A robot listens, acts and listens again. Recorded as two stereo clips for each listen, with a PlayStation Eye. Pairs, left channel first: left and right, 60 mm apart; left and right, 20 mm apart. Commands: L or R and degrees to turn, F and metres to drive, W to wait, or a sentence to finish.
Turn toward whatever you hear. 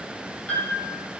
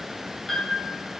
L25
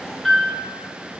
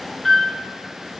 Facing the piano, 1 to 2 m away.